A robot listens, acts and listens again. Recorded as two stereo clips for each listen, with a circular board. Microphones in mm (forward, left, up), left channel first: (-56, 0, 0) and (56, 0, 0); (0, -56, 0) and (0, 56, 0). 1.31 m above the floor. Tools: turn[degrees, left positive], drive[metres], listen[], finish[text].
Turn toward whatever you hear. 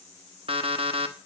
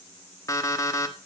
Thought: The alarm clock: 30° right.
Action: turn[-30]
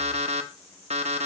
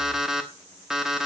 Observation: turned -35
Action: finish[Found it: an alarm clock, straight ahead.]